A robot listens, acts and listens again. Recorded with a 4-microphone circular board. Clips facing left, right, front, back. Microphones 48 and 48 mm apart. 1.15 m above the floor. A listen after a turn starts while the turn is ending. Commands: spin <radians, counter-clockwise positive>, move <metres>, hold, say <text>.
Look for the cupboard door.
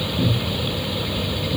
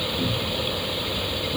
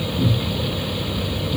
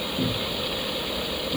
spin 3.14
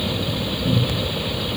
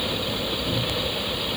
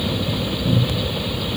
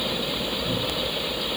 spin 0.87
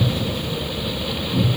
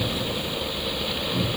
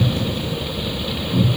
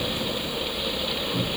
say Facing the cupboard door.